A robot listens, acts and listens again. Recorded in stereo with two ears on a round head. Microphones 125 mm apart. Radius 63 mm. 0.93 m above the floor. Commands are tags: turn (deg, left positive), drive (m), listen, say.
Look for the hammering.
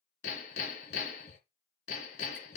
<turn deg="55"/>
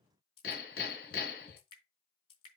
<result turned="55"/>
<turn deg="70"/>
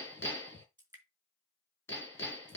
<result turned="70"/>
<turn deg="15"/>
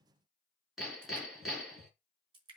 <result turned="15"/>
<say>Found it: hammering, straight ahead.</say>